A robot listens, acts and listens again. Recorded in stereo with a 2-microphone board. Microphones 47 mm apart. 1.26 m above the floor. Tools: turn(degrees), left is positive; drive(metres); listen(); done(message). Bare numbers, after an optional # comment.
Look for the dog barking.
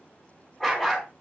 turn(30)
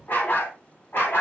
# So it is at 125° left.
turn(125)
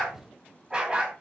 # The dog barking is now 20° right.
turn(-20)
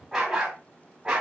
# The dog barking is now 20° right.
turn(-20)
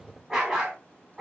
# The dog barking is now 10° right.
turn(-10)
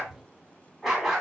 done("Found it: a dog barking, straight ahead.")